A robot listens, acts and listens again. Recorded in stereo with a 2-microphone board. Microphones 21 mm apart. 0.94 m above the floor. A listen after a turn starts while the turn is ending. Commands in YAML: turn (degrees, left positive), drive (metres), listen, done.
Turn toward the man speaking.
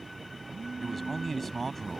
turn: 30
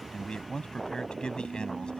turn: 135
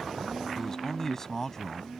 turn: 15
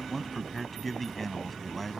done: "Facing the man speaking."